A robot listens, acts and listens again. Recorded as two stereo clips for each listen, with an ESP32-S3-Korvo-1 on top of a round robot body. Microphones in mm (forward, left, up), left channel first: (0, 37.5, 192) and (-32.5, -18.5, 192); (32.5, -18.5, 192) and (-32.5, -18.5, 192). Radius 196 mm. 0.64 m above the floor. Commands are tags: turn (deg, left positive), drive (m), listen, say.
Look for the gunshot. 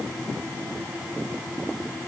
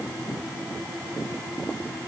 <listen/>
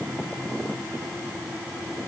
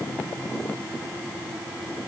<listen/>
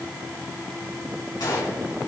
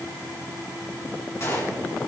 <turn deg="45"/>
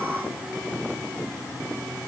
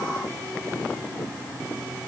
<say>Facing where the gunshot came from. I can't hear it now.</say>